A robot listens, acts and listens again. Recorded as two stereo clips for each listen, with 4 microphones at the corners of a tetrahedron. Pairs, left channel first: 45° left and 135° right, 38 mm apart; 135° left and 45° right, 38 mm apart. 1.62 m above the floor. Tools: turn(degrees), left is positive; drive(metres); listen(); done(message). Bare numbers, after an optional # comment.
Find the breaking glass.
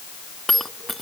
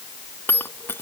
# The breaking glass: 130° left.
turn(130)
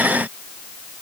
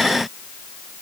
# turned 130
done("Facing where the breaking glass came from. I can't hear it now.")